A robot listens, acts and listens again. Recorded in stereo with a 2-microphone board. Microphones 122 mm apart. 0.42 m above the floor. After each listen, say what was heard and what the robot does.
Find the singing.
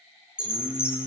The singing: about 15° right or 165° right. Turn 15° right.
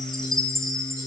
The singing: about 30° right or 150° right. Turn 30° right.
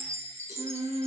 So it is at 120° right. Turn 120° right.
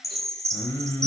The singing is now 20° left. Turn 20° left.
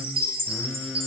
The singing is now 10° left. Turn 10° left.
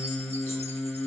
The singing is now 10° left. Turn 10° left.
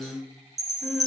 Facing the singing, 1 to 2 m away.